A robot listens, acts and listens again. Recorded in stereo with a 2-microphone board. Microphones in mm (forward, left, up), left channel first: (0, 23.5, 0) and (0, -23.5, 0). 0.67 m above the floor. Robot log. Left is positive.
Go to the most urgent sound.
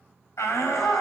cmd yaw +90
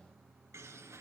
cmd idle
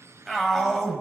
cmd fwd 1.0
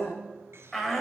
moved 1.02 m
cmd fwd 1.0
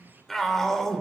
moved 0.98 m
cmd fwd 1.0
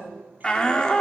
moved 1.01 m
note: The shout is now 20° left.
cmd yaw +20
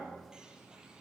cmd idle
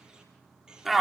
cmd fwd 1.0
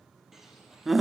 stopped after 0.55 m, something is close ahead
note: The shout is now 10° right.
cmd yaw -10
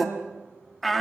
end: Arrived at the shout, straight ahead.